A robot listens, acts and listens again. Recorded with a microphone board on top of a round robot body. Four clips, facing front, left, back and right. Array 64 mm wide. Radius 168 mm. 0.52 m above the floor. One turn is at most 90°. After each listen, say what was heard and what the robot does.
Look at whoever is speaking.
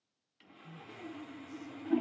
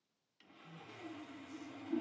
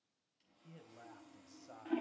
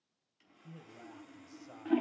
The man speaking: 135° right. Turn 90° right.
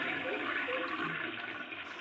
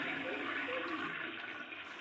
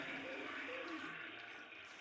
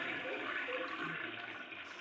Nothing new. It was at 45° right. Turn 45° right.
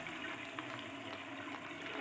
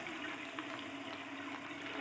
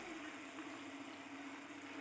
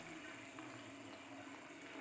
Keep listening.
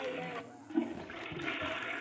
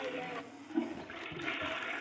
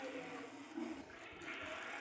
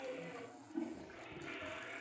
I heard a man speaking from this way, but can't make it out now.